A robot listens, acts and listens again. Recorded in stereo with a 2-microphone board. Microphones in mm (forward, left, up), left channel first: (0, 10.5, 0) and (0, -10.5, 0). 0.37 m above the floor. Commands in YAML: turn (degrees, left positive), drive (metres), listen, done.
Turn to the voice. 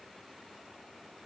listen: true
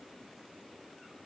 listen: true
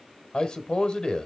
turn: 55
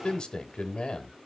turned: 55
turn: 55
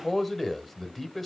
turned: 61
done: "Facing the man speaking, 1 to 2 m away."